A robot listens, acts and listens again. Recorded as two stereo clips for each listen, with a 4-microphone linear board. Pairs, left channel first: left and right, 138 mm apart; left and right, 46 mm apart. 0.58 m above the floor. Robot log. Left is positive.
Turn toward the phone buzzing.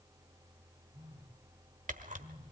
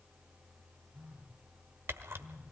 note: The phone buzzing: about 45° right or 135° right.
cmd yaw -45
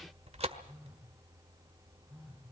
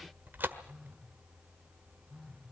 end: Facing the phone buzzing, over 4 m away.